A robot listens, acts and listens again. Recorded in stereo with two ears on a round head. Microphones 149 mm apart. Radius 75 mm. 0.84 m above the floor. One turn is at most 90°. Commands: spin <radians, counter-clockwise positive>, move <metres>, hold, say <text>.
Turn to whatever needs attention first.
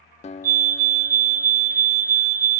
spin -0.96
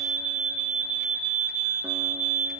spin -0.79
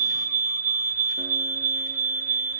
spin -0.26
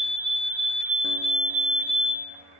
say Facing the fire alarm, 2 to 4 m away.